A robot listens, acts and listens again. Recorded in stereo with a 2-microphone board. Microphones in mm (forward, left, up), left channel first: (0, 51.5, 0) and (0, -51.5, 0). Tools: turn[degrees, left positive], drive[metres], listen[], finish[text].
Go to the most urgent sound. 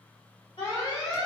Thought: The alarm: about 35° left or 145° left.
Action: turn[35]
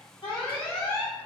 Thought: So it is at 105° left.
Action: turn[105]
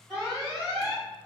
Action: drive[1.0]
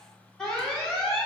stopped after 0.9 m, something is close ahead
Thought: The alarm is now 10° left.
Action: turn[10]
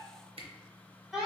Action: finish[I am next to the alarm.]